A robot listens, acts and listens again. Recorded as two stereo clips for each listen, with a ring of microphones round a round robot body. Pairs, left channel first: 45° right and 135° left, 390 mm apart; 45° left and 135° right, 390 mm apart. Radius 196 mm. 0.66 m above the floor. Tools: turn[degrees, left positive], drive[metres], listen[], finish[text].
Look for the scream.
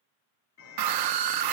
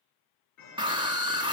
Thought: The scream: 150° left.
Action: turn[150]
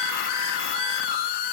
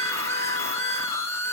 Thought: The scream is now 35° right.
Action: turn[-35]
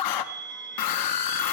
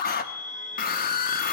Thought: The scream is now 20° right.
Action: turn[-20]
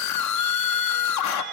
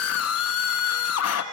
Action: finish[Found it: a scream, straight ahead.]